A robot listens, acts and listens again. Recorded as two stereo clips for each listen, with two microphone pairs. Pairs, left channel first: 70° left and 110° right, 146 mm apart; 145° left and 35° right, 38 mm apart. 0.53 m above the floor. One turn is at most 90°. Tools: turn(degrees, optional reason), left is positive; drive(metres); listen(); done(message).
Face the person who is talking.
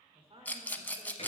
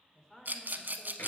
turn(degrees=-90, reason="The woman speaking: 145° right.")
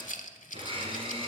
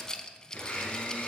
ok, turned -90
turn(degrees=-55, reason="Nothing new. It was at 55° right.")
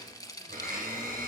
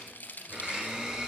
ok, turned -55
listen()
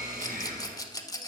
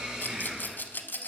done("Facing where the woman speaking came from. I can't hear it now.")